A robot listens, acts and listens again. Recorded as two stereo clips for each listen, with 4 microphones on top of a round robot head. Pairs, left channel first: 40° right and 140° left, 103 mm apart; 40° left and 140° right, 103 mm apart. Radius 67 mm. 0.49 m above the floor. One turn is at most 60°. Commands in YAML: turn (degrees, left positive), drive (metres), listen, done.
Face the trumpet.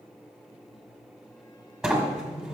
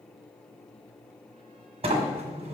listen: true
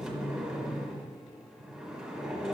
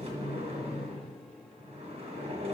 listen: true
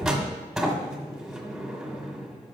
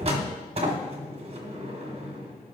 done: "I can't make out a trumpet, only a sliding door."